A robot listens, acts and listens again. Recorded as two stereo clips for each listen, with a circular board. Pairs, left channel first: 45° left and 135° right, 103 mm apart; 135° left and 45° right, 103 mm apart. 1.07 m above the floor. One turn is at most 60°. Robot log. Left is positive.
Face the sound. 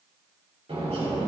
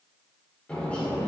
note: The bird: 150° right.
cmd yaw -60
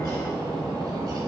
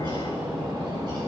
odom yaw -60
note: The bird is now 90° right.
cmd yaw -60
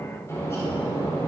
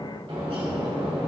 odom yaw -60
note: The bird is now 15° right.
cmd yaw -15
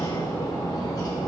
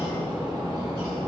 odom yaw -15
end: Facing the bird, 1 to 2 m away.